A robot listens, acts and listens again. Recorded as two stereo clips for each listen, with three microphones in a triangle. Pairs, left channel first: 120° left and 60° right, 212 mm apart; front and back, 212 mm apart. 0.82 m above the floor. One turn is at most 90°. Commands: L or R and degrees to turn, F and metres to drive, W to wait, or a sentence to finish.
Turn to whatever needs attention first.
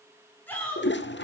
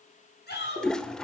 L40
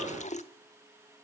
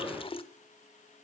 W
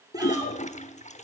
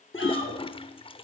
W
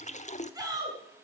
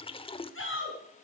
L15
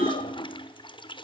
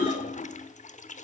W
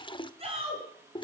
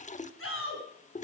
Found it: a shout, straight ahead.